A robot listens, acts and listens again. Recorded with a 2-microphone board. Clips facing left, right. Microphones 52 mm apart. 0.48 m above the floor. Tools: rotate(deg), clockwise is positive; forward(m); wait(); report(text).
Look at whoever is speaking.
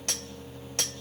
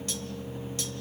wait()
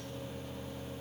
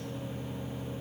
wait()
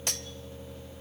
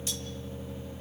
report("I can't make out anyone speaking to turn to.")